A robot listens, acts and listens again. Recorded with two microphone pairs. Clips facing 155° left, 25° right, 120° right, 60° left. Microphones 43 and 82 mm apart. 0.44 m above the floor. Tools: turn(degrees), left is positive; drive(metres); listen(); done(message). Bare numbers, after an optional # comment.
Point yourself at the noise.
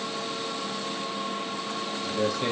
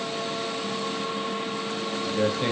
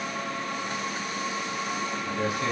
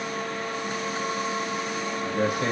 # The man speaking: 40° left.
turn(40)
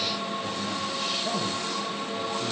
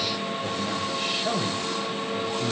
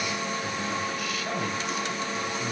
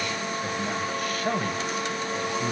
# The man speaking is now 30° left.
turn(30)
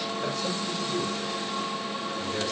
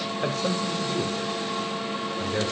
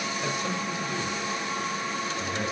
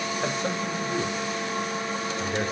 # The man speaking is now 25° left.
turn(25)
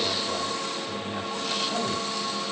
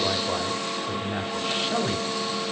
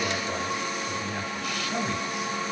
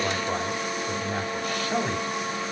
# The man speaking is now 15° left.
turn(15)
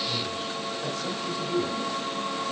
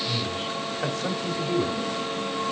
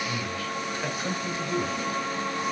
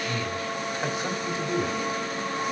done("Found it: a man speaking, straight ahead.")